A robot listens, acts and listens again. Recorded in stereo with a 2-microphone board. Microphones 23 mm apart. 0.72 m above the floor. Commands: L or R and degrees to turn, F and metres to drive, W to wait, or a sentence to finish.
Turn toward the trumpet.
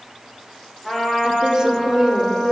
L15
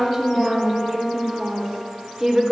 W
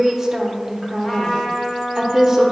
L150
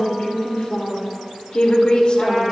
W
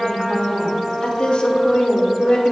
Found it: a trumpet, straight ahead, 1 to 2 m away.